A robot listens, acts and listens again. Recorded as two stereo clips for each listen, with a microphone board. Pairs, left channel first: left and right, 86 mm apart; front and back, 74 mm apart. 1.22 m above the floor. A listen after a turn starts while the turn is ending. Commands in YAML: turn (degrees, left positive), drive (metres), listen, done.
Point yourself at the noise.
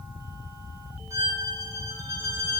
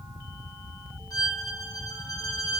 turn: -40
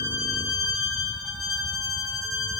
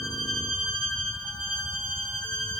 done: "Found it: a violin, straight ahead, 1 to 2 m away."